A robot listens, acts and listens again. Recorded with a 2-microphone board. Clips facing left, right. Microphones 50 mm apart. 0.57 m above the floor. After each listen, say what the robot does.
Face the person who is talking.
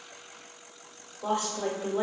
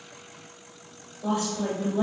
Turn 60° left.
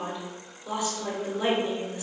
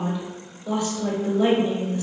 Turn 15° left.
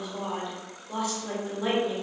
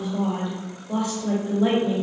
Facing the woman speaking.